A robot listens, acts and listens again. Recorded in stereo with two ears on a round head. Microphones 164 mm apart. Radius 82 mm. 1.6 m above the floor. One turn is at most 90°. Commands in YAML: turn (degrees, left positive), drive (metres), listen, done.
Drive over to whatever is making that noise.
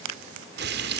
turn: -60
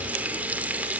turn: -10
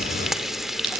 drive: 1.0
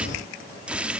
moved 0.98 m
drive: 1.0
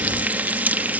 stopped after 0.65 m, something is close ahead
turn: -10
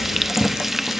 done: "Arrived at the frying, straight ahead."